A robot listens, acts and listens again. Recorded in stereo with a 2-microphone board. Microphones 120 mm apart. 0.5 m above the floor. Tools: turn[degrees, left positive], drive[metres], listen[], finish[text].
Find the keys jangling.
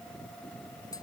Action: listen[]
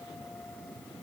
Action: listen[]
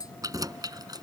Thought: The keys jangling: about 35° right or 145° right.
Action: turn[-35]
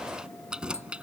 Thought: So it is at 10° right.
Action: turn[-10]
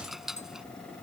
Action: finish[Facing the keys jangling.]